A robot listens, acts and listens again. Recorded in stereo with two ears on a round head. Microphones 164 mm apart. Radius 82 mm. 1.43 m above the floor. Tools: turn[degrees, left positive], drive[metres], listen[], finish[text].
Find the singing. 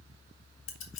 Action: listen[]
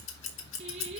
Thought: The singing: about 35° right or 145° right.
Action: turn[-35]
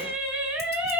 Action: finish[Found it: singing, straight ahead, 2 to 4 m away.]